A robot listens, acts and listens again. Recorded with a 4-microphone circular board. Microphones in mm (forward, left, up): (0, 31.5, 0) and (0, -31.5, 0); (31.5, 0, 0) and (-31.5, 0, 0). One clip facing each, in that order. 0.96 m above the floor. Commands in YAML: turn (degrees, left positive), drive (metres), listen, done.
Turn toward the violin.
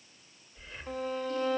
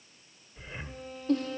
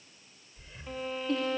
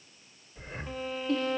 turn: 90
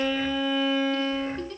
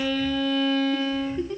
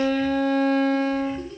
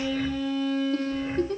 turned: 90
turn: 15
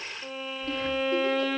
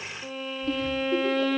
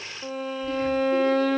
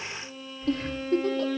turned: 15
done: "Found it: a violin, straight ahead."